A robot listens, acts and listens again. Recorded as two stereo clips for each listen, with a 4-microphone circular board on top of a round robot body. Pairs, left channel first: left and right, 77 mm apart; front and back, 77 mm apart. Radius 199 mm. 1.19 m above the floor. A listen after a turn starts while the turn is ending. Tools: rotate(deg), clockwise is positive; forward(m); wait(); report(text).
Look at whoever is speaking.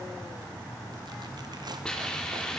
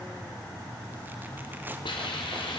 wait()
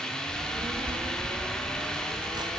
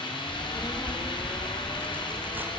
rotate(80)
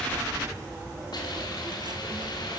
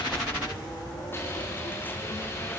rotate(30)
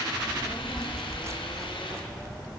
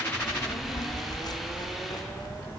report("Facing the child speaking.")